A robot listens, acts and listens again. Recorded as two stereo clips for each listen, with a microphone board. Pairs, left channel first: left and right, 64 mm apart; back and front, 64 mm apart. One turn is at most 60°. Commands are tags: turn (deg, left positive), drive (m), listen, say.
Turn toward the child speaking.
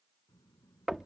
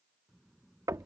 <turn deg="60"/>
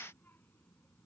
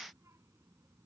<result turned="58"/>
<turn deg="35"/>
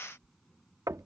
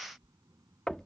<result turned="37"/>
<say>Found it: a child speaking, straight ahead.</say>